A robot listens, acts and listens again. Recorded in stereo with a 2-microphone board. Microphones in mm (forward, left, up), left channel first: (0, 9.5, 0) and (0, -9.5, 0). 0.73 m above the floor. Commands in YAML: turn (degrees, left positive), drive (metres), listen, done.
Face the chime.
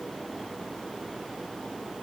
listen: true
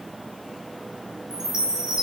turn: -35
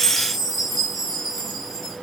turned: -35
done: "Facing the chime, over 4 m away."